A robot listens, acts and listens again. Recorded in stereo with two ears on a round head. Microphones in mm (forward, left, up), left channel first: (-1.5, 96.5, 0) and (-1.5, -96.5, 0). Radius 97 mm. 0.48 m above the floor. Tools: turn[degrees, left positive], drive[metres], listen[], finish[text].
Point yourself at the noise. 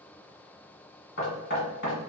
Thought: The knocking: about 50° left or 130° left.
Action: turn[50]
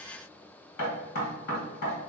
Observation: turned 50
Thought: So it is at 70° left.
Action: turn[70]
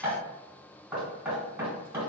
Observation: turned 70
Thought: The knocking is now 10° right.
Action: turn[-10]
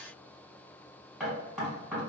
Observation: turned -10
Action: finish[Facing the knocking, 2 to 4 m away.]